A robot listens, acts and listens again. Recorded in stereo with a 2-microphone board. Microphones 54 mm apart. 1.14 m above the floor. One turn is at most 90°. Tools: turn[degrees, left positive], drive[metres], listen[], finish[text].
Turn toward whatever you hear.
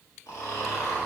Action: turn[90]
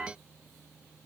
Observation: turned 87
Action: listen[]
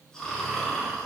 Thought: The snoring is now 10° left.
Action: turn[10]
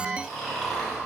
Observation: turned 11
Action: finish[Facing the snoring, 1 to 2 m away.]